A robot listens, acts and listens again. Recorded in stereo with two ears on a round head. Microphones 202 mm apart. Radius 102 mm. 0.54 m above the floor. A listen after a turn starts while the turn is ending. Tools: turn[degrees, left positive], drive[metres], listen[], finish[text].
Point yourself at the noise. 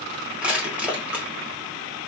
Action: turn[-30]
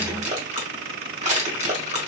Thought: So it is at 145° right.
Action: turn[-145]
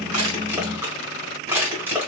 Thought: The crushing is now 10° right.
Action: turn[-10]
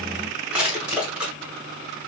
Action: finish[Found it: crushing, straight ahead.]